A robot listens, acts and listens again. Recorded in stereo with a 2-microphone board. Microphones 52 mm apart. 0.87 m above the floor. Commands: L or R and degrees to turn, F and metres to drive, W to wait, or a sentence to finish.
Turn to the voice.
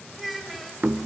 L30
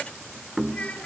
L155
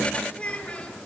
L25
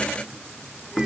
W
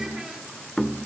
W
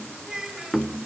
R10
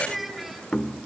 Found it: a child speaking, straight ahead.